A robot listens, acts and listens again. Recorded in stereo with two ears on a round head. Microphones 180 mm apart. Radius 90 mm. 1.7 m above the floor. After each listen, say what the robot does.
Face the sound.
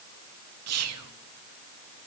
Turn 90° right.
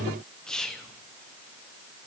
Found it: whispering, straight ahead.